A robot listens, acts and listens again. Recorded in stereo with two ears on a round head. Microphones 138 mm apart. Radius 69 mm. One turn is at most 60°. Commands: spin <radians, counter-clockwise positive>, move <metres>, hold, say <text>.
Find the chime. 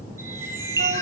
spin -0.35
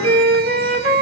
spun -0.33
hold
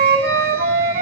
hold
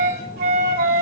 say I heard a chime, but can't make it out now. It was about straight ahead or 145° right.